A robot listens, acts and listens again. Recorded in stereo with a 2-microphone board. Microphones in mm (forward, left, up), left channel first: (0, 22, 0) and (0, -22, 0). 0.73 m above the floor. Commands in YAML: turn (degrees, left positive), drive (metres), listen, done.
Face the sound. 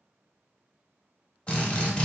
turn: 30
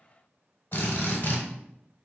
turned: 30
turn: 120
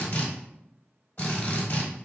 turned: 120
turn: 35
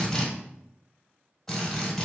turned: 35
done: "Found it: a drill, straight ahead, under 1 m away."